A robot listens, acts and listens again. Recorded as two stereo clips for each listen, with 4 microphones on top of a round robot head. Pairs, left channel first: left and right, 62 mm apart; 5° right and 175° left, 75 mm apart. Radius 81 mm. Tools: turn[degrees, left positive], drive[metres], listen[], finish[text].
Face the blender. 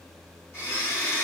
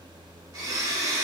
Thought: The blender: 140° left.
Action: turn[140]
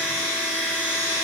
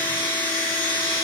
Thought: The blender is now 20° right.
Action: turn[-20]
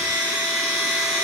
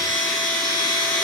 Action: finish[Facing the blender.]